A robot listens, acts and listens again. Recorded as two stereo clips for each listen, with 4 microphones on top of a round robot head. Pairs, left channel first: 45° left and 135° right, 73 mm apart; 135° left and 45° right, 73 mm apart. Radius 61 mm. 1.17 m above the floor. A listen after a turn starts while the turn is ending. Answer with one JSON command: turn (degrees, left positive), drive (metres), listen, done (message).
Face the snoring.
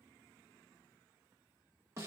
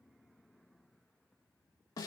{"listen": true}
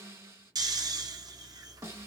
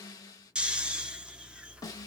{"turn": -120}
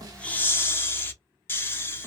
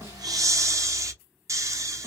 {"turn": -10}
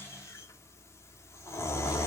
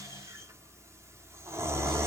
{"done": "Facing the snoring."}